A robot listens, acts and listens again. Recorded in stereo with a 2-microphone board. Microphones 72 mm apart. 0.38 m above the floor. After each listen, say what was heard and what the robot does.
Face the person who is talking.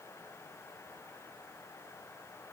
Keep listening.
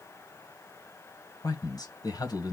The man speaking: about 60° left or 120° left. Turn 60° left.
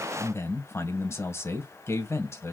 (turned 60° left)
So it is at 45° left. Turn 45° left.
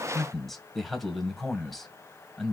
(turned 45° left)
Facing the man speaking.